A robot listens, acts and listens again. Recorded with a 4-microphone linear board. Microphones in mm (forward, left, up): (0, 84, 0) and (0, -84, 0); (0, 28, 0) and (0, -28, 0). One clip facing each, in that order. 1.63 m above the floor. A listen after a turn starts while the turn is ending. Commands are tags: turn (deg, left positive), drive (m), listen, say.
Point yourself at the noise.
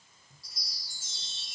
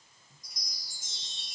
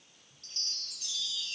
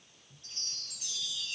<turn deg="-15"/>
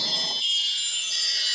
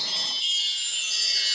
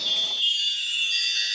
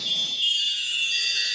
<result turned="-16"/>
<say>Found it: a chime, straight ahead.</say>